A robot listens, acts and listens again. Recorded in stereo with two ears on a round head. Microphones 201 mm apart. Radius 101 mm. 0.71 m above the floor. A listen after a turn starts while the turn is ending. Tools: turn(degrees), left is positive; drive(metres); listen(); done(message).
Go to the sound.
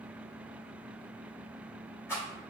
turn(degrees=30)
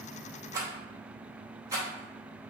turn(degrees=-15)
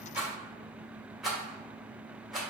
drive(metres=1.0)
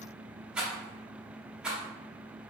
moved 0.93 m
drive(metres=1.0)
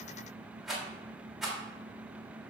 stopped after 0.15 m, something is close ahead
done("Arrived at the rattle, straight ahead.")